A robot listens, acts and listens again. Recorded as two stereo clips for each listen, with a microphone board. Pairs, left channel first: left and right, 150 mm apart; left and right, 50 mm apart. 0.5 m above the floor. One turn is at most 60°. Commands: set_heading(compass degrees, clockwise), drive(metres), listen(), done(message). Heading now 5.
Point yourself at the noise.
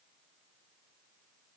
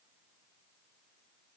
listen()
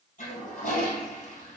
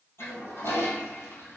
set_heading(305)
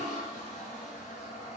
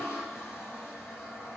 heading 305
set_heading(250)
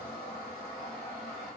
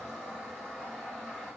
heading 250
done("Facing the toilet flushing, 2 to 4 m away.")